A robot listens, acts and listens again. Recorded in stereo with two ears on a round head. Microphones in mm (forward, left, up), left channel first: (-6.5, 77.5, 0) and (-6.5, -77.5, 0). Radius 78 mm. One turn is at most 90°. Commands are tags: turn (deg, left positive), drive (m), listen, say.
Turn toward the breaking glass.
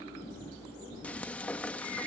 <listen/>
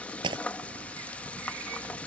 <turn deg="-30"/>
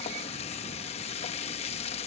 <listen/>
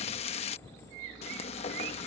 <say>I heard breaking glass, but can't make it out now. It was about straight ahead or 120° right.</say>